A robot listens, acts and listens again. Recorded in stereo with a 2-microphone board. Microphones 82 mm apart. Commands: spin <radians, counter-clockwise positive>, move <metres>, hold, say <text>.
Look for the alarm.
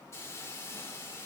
hold
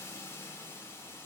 hold
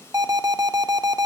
spin -0.87
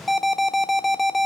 say Facing the alarm.